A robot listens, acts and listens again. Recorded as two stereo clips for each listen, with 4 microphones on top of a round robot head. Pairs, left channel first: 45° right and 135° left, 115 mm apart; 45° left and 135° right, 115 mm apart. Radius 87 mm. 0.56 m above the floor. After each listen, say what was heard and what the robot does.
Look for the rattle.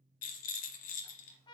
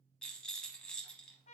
The rattle: 40° right. Turn 40° right.
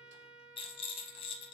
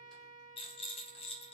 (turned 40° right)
Found it: a rattle, straight ahead, under 1 m away.